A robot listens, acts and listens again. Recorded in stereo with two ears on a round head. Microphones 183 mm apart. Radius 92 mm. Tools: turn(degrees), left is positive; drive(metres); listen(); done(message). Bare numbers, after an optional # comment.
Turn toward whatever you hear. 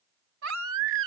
# The baby crying: about 75° right or 105° right.
turn(-75)
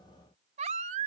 # So it is at 35° right.
turn(-35)
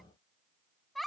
done("Found it: a baby crying, straight ahead.")